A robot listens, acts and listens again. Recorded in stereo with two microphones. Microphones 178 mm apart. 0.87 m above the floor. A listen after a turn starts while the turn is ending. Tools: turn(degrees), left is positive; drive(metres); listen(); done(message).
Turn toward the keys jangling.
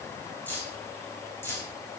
turn(degrees=30)
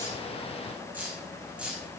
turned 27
done("Found it: keys jangling, straight ahead.")